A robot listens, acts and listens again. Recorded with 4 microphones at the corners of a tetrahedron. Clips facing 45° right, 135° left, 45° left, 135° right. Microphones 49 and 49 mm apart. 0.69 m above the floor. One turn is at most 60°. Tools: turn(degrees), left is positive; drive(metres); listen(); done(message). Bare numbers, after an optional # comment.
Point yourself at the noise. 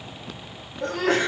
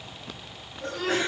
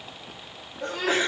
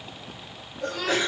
# The sneeze: 20° right.
turn(-20)
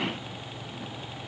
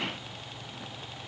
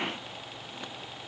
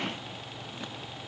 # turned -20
done("Facing where the sneeze came from. I can't hear it now.")